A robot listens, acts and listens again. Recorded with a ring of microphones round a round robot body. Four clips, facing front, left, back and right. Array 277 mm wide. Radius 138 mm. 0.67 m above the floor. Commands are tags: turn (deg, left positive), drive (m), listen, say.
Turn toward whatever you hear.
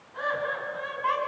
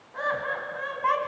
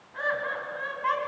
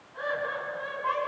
<turn deg="105"/>
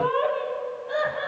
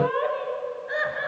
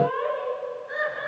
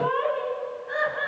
<turn deg="30"/>
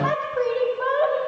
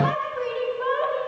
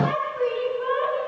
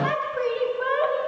<turn deg="-20"/>
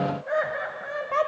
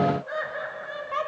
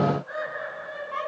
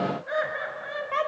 <turn deg="-15"/>
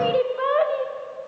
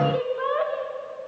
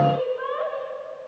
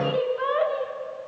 <say>Found it: laughter, straight ahead.</say>